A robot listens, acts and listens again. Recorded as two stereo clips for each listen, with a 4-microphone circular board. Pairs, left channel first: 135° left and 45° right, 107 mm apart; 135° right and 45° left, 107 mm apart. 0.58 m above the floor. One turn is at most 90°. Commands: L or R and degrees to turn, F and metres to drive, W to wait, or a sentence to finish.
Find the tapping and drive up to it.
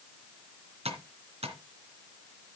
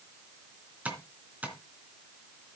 R30
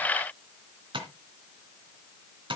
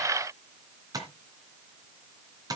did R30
R10
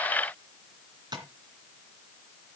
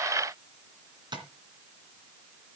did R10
F1.0
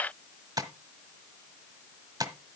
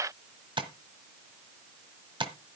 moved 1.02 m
L10
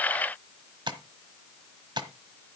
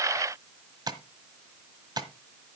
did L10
F1.0
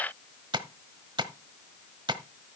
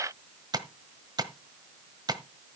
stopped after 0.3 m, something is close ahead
I am next to the tapping.